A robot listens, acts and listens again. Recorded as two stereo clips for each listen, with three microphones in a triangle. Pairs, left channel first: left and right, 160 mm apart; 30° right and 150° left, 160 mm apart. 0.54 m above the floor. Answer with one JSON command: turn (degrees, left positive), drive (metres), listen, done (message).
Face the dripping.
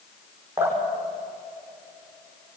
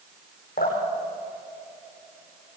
{"turn": -15}
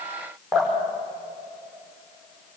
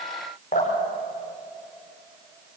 {"done": "Facing the dripping, over 4 m away."}